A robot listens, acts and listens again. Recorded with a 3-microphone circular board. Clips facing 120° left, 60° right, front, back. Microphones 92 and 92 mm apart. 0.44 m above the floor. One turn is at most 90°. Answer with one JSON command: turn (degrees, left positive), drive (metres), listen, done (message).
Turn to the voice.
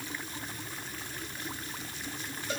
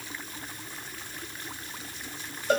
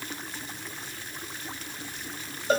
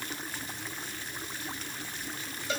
{"listen": true}
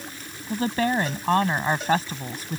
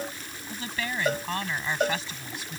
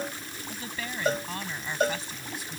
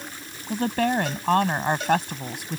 {"turn": 90}
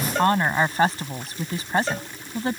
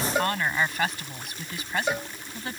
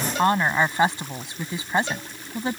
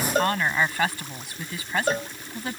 {"turn": 65}
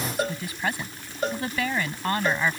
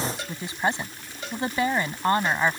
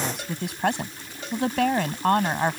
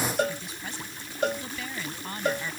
{"done": "Facing the woman speaking."}